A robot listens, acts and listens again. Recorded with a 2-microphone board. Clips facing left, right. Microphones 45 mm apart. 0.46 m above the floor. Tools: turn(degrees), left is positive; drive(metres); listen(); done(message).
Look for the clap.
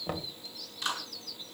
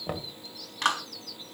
turn(degrees=-75)
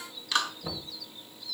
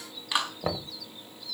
turn(degrees=-20)
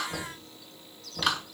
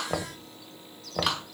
done("Facing the clap, 2 to 4 m away.")